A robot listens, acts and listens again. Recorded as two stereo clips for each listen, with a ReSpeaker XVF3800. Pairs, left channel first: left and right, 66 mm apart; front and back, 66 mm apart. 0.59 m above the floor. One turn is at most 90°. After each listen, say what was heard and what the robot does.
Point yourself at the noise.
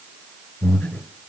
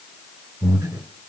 The breathing: 160° left. Turn 90° left.
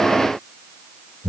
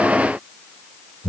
The breathing is now 80° left. Turn 80° left.
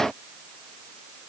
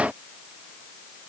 Keep listening.
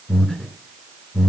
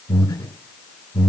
The breathing is now 20° left. Turn 20° left.
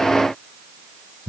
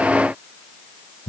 Found it: breathing, straight ahead.